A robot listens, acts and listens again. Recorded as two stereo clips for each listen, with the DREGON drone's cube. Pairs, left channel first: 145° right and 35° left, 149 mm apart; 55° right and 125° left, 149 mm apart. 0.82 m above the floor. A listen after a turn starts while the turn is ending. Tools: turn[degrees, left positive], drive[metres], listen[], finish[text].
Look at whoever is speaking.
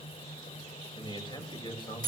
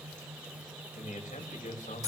Thought: The man speaking: 90° right.
Action: turn[-90]
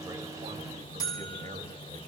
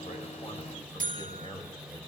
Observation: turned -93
Action: finish[Facing the man speaking, 2 to 4 m away.]